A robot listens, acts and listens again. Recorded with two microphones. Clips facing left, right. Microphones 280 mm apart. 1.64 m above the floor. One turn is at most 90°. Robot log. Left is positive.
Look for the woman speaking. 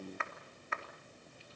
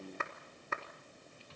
cmd idle
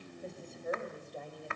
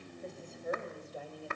cmd yaw -30
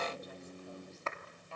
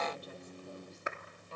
note: So it is at 135° right.
cmd yaw -90
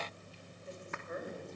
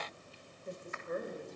note: The woman speaking is now 45° right.
cmd yaw -45
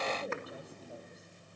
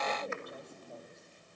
cmd idle
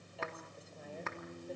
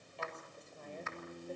cmd idle
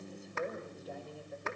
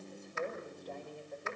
end: Found it: a woman speaking, straight ahead, over 4 m away.